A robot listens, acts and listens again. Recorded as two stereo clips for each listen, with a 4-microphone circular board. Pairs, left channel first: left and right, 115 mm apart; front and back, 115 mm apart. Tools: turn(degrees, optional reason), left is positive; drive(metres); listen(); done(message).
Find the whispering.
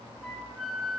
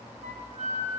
listen()
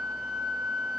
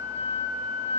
listen()
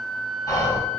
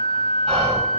turn(degrees=145, reason="The whispering: 145° left.")
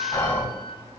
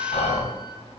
turn(degrees=15, reason="The whispering is now 15° left.")
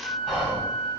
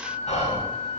done("Found it: whispering, straight ahead, 2 to 4 m away.")